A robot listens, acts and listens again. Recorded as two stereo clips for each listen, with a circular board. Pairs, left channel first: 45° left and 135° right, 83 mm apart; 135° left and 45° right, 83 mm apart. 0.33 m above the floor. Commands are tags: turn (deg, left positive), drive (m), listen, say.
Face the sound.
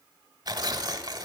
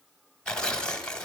<turn deg="-145"/>
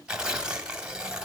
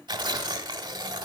<turn deg="-55"/>
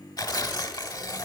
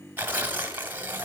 <turn deg="20"/>
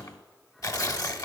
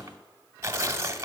<say>Found it: tearing paper, straight ahead, 1 to 2 m away.</say>